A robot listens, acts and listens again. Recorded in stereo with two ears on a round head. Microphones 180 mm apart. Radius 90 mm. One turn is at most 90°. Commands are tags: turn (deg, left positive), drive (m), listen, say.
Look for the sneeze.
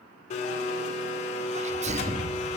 <turn deg="-35"/>
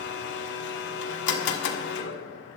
<listen/>
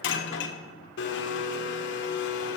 <say>I heard a sneeze, but can't make it out now. It was about straight ahead or 110° right.</say>